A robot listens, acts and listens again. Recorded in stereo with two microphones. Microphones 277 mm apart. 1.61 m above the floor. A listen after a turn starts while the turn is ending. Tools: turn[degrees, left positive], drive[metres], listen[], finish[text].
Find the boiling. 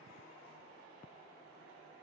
Action: listen[]
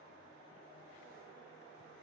Action: listen[]
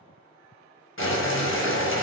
Thought: The boiling: about 45° left or 135° left.
Action: turn[45]
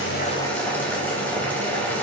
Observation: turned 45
Action: finish[Found it: boiling, straight ahead, under 1 m away.]